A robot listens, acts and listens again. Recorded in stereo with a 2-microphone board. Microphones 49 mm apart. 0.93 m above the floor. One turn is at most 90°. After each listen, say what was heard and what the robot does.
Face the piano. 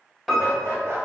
Turn 30° left.
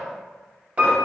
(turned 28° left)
So it is at 30° right. Turn 30° right.
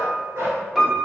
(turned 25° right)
Facing the piano, under 1 m away.